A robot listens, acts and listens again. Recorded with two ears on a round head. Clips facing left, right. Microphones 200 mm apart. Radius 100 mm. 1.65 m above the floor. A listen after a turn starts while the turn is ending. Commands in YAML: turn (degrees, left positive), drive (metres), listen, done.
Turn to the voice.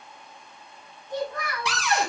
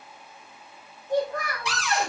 turn: -45
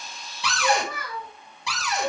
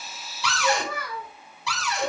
turn: -90
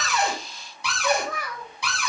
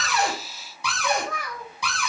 done: "Facing the child speaking, over 4 m away."